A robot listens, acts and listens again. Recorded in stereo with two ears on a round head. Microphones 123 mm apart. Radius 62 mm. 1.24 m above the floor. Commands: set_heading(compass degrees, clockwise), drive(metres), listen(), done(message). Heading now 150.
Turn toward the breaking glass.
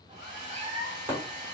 set_heading(165)
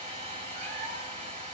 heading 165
listen()
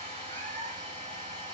done("I heard breaking glass, but can't make it out now. It was about straight ahead or 150° right.")